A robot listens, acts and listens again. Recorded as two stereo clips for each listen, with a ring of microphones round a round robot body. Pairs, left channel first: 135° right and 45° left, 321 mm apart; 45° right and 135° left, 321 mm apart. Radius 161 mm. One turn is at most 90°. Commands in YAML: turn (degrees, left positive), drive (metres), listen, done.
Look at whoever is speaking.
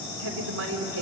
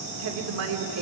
turn: 90
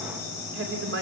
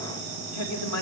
done: "Facing the woman speaking."